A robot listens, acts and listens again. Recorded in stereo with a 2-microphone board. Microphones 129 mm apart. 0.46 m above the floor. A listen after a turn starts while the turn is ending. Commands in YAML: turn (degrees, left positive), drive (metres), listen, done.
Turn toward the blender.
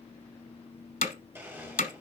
turn: -15
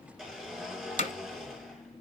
done: "Found it: a blender, straight ahead."